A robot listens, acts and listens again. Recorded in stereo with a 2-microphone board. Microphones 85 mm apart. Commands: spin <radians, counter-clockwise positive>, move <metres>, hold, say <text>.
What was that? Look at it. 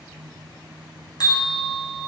spin 0.96
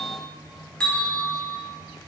spin 0.26
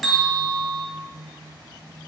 say Facing the bell.